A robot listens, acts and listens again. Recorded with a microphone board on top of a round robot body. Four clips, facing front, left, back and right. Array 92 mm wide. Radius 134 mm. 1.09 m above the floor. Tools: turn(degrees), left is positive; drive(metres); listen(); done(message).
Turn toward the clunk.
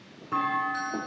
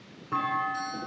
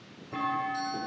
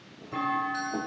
turn(degrees=40)
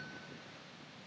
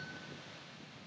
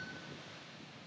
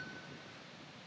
done("Facing where the clunk came from. I can't hear it now.")